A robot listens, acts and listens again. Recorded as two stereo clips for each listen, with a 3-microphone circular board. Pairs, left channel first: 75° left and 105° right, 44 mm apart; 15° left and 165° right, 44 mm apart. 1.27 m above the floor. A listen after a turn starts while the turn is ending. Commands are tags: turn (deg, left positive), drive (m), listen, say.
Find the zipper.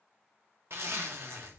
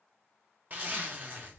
<turn deg="-115"/>
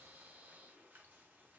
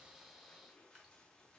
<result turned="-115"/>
<listen/>
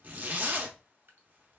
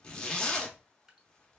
<turn deg="-55"/>
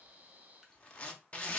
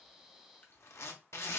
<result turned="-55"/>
<turn deg="10"/>
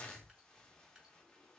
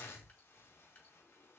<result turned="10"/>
<listen/>
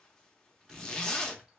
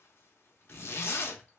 <say>Found it: a zipper, straight ahead, under 1 m away.</say>